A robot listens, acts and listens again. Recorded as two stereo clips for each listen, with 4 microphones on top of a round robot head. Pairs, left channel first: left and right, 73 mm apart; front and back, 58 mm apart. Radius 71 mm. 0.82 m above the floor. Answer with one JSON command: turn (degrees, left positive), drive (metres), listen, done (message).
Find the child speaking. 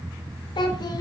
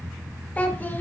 {"turn": 65}
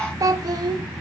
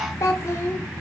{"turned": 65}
{"turn": -60}
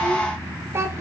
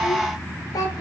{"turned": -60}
{"turn": -35}
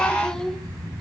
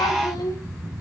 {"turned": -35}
{"done": "Facing the child speaking, 1 to 2 m away."}